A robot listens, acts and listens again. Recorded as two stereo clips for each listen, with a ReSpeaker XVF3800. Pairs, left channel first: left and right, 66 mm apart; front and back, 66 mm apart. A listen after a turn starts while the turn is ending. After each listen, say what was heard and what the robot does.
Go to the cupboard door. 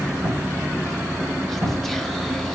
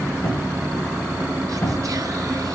The cupboard door: 25° right. Turn 25° right.
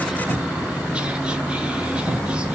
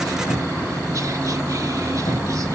Drive 1.0 m forward.
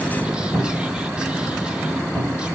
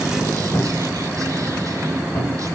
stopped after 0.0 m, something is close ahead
Blocked. The cupboard door is further on, straight ahead.